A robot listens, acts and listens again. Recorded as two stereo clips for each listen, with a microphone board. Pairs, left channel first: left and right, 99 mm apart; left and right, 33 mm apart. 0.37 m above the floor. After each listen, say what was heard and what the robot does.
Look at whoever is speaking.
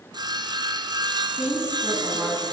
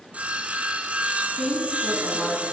The woman speaking: about 20° right or 160° right. Turn 20° right.
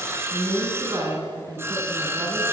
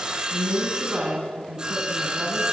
So it is at 135° right. Turn 135° right.
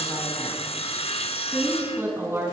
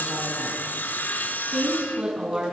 The woman speaking is now 25° right. Turn 25° right.
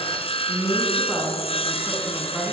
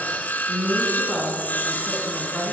Found it: a woman speaking, straight ahead, over 4 m away.